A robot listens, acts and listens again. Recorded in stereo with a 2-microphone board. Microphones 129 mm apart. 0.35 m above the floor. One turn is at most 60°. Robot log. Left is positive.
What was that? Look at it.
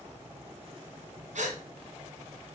note: The gasp: about 70° right or 110° right.
cmd yaw -60
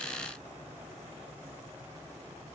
cmd idle
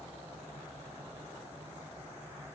end: I heard a gasp, but can't make it out now. It was about 10° right or 50° right.